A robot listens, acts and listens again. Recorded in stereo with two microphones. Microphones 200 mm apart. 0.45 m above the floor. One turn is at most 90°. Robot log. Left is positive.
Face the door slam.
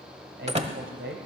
note: The door slam: about 30° right or 150° right.
cmd yaw -30
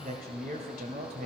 cmd idle
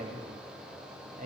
end: I heard a door slam, but can't make it out now. It was about straight ahead or 120° right.